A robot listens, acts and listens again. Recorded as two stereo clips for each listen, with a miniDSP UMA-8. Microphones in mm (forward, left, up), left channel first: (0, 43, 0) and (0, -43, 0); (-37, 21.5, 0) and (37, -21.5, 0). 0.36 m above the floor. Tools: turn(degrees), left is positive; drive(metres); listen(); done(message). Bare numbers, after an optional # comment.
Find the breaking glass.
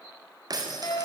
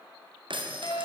# The breaking glass: 45° right.
turn(-45)
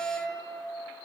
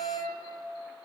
done("Facing where the breaking glass came from. I can't hear it now.")